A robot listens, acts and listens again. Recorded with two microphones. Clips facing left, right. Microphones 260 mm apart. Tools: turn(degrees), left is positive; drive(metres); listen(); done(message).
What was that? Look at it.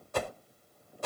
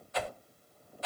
turn(degrees=50)
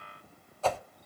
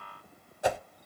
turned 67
turn(degrees=-15)
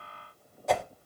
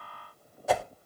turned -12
done("Facing the whoosh.")